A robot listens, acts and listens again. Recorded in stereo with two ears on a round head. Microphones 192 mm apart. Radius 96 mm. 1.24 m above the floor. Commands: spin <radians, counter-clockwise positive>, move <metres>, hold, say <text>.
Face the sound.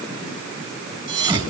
spin -0.35
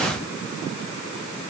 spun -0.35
hold
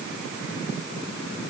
say I heard a thud, but can't make it out now. It was about straight ahead or 140° right.